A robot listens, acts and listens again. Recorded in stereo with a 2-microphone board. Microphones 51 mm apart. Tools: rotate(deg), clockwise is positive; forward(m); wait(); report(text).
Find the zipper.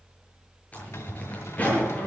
rotate(-30)
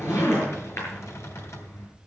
rotate(-120)
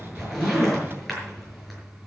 report("Facing the zipper.")